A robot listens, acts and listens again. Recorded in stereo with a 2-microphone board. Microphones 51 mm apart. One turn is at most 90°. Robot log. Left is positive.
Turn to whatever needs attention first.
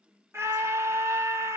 note: The scream: about 65° right or 115° right.
cmd yaw -65
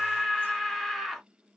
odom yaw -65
end: Facing the scream.